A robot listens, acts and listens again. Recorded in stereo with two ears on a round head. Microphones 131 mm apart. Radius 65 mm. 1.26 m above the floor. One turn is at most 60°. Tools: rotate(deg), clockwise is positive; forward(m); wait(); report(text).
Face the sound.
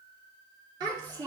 rotate(35)
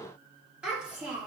rotate(15)
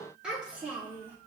rotate(15)
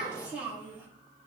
rotate(15)
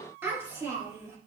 rotate(25)
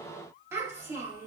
rotate(20)
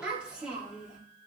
rotate(10)
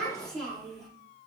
report("Facing the child speaking.")